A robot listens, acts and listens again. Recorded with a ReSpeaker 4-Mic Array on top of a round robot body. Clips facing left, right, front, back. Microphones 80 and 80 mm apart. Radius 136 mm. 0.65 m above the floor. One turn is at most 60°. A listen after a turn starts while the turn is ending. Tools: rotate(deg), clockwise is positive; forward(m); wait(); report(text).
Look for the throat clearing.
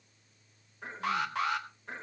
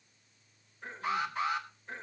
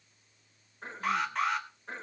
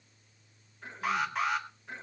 rotate(-55)
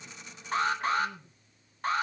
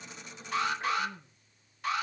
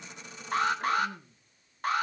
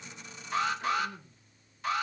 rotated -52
report("Found it: throat clearing, straight ahead.")